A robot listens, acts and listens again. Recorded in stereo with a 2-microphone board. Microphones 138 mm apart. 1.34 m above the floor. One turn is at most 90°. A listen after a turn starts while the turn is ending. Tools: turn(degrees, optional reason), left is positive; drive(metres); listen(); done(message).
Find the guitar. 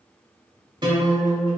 turn(degrees=-40, reason="The guitar: about 40° right or 140° right.")
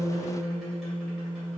done("Found it: a guitar, straight ahead, 1 to 2 m away.")